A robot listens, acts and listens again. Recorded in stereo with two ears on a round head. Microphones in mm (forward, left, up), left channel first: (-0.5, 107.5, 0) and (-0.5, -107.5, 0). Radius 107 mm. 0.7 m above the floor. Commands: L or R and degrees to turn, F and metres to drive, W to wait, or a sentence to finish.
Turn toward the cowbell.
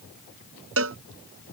R60
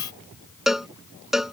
Facing the cowbell.